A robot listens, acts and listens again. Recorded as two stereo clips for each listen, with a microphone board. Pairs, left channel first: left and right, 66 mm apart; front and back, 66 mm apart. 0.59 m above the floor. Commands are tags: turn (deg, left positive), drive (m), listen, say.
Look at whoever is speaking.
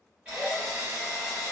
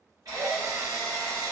<listen/>
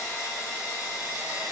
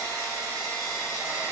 <listen/>
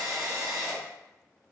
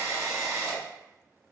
<say>I can't make out anyone speaking, only a drill.</say>